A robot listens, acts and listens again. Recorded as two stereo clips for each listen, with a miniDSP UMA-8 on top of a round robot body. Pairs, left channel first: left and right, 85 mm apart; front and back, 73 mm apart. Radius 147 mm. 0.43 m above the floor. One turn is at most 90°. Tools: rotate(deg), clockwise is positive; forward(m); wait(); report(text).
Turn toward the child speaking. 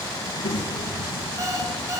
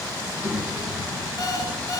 rotate(-90)
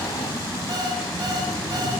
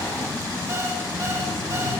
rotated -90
wait()
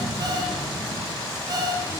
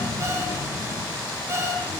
report("Found it: a child speaking, straight ahead.")